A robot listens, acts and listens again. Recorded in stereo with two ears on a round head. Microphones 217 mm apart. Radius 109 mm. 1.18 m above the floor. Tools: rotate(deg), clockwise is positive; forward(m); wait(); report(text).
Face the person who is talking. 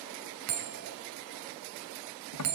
wait()
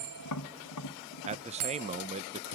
rotate(25)
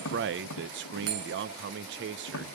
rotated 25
rotate(125)
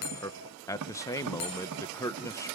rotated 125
rotate(-15)
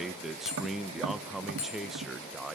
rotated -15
report("Found it: a man speaking, straight ahead, under 1 m away.")